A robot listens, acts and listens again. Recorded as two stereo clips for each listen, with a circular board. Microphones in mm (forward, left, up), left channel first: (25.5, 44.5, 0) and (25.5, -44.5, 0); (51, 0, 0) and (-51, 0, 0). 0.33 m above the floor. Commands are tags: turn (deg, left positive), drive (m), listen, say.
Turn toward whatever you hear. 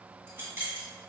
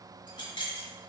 <turn deg="-30"/>
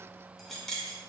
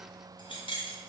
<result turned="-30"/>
<say>Found it: keys jangling, straight ahead, 1 to 2 m away.</say>